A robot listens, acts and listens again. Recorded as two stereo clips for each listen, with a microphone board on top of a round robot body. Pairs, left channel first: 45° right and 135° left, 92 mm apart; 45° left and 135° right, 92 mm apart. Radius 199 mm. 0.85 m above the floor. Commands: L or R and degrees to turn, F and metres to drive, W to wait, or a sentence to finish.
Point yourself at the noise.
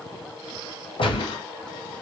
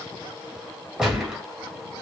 R55
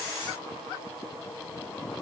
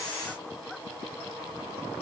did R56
Facing where the gunshot came from. I can't hear it now.